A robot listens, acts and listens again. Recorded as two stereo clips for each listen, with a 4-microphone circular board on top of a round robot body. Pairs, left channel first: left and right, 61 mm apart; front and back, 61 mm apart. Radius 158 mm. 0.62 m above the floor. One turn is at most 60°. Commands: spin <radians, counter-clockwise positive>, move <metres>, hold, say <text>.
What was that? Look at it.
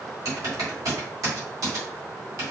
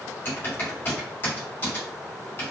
spin -0.96
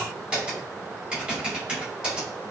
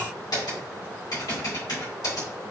spin -0.26
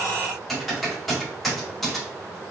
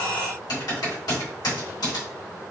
say Facing the typing on a keyboard, 1 to 2 m away.